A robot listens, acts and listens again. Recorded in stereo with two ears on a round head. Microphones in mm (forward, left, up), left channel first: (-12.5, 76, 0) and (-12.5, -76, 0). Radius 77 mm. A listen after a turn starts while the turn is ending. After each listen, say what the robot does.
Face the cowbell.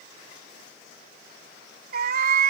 Keep listening.
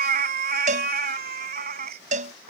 Turn 45° right.
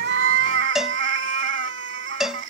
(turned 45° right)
Facing the cowbell.